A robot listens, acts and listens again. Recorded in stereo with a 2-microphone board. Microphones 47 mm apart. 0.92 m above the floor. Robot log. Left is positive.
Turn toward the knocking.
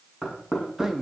cmd yaw -30
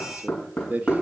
note: So it is at 15° left.
cmd yaw +15
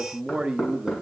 end: Found it: knocking, straight ahead, over 4 m away.